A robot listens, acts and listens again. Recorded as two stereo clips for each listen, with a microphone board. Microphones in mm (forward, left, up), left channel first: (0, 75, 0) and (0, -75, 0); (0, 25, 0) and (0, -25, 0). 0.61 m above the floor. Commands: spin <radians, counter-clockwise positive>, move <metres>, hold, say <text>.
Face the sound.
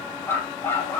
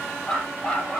spin 0.52
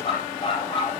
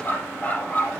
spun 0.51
spin 2.53
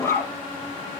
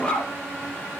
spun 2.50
spin 0.35
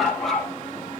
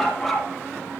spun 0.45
say Found it: a dog barking, straight ahead.